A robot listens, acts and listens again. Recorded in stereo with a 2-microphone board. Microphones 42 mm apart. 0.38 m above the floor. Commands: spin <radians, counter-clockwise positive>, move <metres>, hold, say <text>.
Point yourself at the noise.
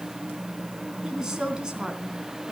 spin -0.44
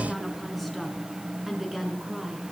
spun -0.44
spin -0.52
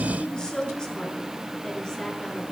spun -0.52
spin 0.26
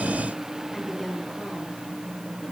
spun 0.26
say Facing the woman speaking.